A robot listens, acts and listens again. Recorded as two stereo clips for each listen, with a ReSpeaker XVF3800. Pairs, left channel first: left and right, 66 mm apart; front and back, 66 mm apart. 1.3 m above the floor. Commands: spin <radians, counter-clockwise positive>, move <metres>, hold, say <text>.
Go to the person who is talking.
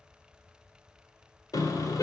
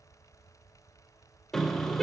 hold
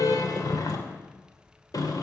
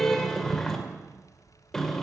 hold
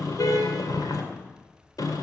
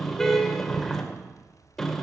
say I can't make out anyone speaking, only a car horn.